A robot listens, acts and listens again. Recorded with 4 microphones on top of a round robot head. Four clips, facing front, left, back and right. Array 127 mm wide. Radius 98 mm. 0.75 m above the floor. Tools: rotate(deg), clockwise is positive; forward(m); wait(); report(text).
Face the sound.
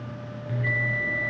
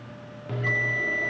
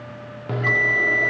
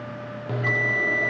rotate(165)
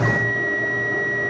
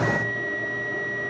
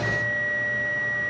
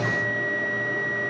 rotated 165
report("Found it: a bell, straight ahead, under 1 m away.")